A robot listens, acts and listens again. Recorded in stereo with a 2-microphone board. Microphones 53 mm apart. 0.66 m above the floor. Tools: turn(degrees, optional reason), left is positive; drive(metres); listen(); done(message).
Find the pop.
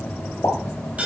turn(degrees=70, reason="The pop: about 70° left or 110° left.")
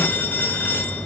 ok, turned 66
listen()
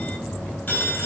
done("I heard a pop, but can't make it out now. It was about straight ahead or 45° left.")